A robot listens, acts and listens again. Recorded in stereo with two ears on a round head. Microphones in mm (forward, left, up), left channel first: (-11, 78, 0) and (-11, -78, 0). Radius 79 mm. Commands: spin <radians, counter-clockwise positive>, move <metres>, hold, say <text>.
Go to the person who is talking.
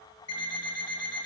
hold
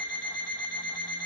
hold
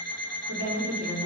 spin -1.57
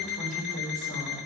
move 1.0
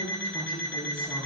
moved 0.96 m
spin 0.17
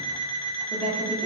move 1.0
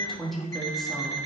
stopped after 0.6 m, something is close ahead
say I am next to the woman speaking.